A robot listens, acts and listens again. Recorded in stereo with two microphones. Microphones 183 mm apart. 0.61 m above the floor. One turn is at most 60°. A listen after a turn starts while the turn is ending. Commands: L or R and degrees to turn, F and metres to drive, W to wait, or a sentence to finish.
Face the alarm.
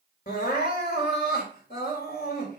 W
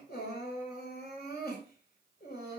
W
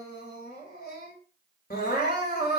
I can't make out an alarm, only crying.